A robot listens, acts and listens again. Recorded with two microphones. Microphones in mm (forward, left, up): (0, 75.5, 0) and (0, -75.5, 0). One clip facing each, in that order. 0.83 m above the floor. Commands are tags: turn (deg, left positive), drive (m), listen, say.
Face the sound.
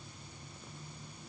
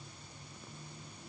<listen/>
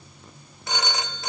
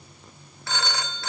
<turn deg="20"/>
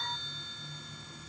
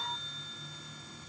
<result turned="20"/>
<listen/>
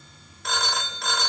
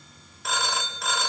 <say>Found it: a phone ringing, straight ahead, under 1 m away.</say>